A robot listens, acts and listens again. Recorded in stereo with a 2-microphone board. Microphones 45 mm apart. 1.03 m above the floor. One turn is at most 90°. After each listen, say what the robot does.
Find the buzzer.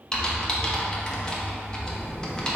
Turn 30° right.
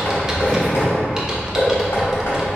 Turn 25° left.
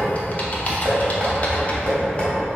Keep listening.
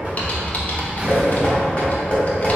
Turn 25° right.
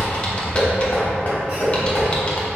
Turn 15° right.
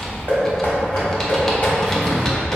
Found it: a buzzer, straight ahead, 1 to 2 m away.